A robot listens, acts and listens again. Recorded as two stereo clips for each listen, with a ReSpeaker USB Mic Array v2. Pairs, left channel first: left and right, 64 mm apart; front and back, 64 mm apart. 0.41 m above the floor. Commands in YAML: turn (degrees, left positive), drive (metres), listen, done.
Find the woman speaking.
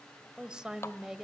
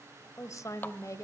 turn: -10
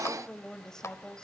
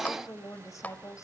turn: 15
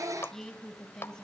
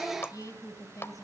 turn: 10
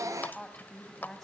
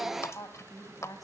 done: "Found it: a woman speaking, straight ahead, 2 to 4 m away."